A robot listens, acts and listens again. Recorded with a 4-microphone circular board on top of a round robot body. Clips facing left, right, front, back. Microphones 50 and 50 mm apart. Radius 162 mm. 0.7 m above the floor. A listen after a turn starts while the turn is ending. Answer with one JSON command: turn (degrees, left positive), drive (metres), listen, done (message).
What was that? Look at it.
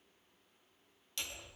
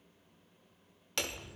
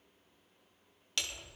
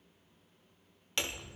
{"turn": -115}
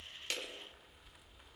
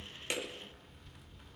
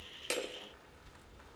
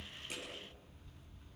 {"done": "Found it: hammering, straight ahead."}